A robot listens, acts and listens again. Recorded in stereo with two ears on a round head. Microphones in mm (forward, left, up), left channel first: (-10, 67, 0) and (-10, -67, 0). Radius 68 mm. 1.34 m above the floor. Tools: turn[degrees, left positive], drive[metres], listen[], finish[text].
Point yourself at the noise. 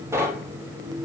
Thought: The knocking: about 20° right or 160° right.
Action: turn[-20]
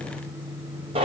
Thought: So it is at 140° right.
Action: turn[-140]
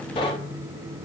Thought: The knocking is now 30° left.
Action: turn[30]
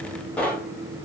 Thought: The knocking is now 10° left.
Action: turn[10]
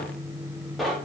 Action: finish[Found it: knocking, straight ahead.]